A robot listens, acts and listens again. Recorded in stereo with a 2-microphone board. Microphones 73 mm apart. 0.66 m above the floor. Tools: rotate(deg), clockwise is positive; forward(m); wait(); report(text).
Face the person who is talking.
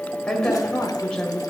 rotate(-30)
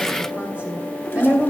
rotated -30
rotate(20)
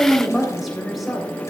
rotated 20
report("Found it: a woman speaking, straight ahead, 2 to 4 m away.")